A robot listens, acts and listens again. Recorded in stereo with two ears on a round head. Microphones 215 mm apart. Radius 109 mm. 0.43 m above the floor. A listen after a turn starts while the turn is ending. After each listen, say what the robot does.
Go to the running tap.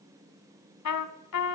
Keep listening.
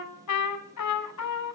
Keep listening.
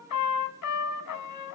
I can't make out a running tap, only a trumpet.